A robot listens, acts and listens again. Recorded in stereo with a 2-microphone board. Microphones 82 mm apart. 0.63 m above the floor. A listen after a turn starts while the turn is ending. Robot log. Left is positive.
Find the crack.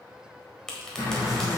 cmd yaw +30
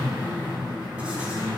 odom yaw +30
cmd idle
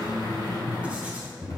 end: I heard a crack, but can't make it out now. It was about 20° right or 140° left.